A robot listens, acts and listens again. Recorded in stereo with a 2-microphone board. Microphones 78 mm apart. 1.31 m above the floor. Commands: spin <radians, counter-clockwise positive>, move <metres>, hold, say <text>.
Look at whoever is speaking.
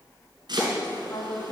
spin 0.96
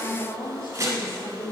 spin 1.22
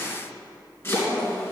say Found it: a woman speaking, straight ahead.